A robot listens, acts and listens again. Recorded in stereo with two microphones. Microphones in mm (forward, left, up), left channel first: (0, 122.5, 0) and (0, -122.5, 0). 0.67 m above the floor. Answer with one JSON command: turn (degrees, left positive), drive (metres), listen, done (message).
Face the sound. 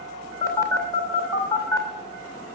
{"turn": 30}
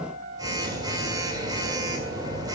{"turn": -15}
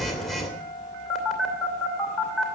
{"done": "Found it: a phone buzzing, straight ahead, 2 to 4 m away."}